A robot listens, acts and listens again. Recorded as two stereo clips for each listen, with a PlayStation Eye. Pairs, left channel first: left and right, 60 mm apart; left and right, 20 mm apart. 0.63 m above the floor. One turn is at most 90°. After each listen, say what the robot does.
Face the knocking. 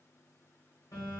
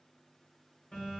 Keep listening.
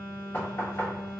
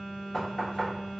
Turn 35° left.
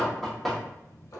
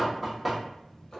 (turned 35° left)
Facing the knocking, 1 to 2 m away.